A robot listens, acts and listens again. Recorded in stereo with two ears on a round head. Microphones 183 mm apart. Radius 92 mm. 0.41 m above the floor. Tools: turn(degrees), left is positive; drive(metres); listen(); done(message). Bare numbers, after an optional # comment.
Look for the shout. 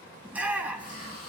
turn(-30)
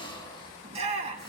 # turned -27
# So it is at 145° right.
turn(-145)
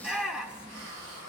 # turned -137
done("Facing the shout.")